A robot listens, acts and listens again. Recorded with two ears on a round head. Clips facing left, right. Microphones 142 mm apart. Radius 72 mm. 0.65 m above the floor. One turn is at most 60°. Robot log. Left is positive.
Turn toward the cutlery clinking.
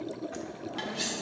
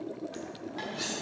note: The cutlery clinking: about 30° left or 150° left.
cmd yaw +30
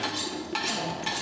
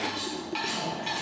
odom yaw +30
note: So it is at 120° left.
cmd yaw +60
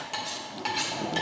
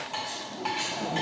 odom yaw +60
note: The cutlery clinking is now 40° left.
cmd yaw +40
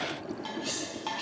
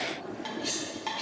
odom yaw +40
end: Facing the cutlery clinking, 1 to 2 m away.